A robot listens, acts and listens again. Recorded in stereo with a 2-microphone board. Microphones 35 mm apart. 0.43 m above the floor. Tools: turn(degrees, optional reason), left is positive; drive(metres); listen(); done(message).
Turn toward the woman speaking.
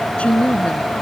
turn(degrees=35, reason="The woman speaking: about 35° left or 145° left.")
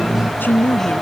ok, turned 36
turn(degrees=110, reason="So it is at 110° left.")
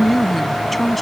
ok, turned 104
done("Found it: a woman speaking, straight ahead.")